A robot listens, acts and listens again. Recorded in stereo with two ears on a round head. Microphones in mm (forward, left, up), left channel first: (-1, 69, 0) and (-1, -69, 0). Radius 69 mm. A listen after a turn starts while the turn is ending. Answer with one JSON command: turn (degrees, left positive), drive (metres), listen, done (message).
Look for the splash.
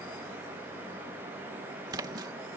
{"turn": -25}
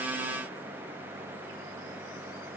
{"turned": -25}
{"listen": true}
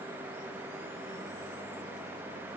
{"done": "I heard a splash, but can't make it out now. It was about straight ahead or 130° right."}